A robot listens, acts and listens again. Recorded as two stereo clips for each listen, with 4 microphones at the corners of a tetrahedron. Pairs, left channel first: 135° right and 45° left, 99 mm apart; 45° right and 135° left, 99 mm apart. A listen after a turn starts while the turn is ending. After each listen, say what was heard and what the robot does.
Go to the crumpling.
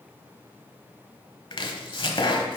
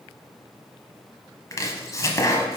Keep listening.
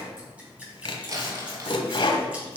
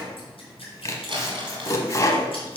The crumpling: 100° left. Turn 100° left.
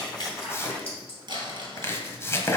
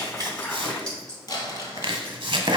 Drive 1.0 m forward.
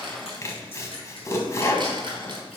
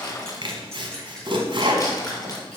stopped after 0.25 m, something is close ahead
Blocked. The crumpling is further on, straight ahead.